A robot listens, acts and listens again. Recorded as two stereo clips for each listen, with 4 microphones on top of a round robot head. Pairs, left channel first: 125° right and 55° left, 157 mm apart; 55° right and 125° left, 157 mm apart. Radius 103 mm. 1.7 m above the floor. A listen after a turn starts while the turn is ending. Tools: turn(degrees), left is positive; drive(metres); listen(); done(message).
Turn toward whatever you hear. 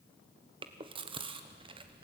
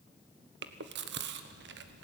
turn(degrees=115)
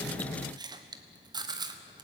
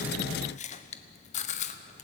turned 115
turn(degrees=-10)
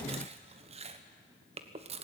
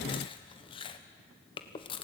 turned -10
done("Facing the chewing, 1 to 2 m away.")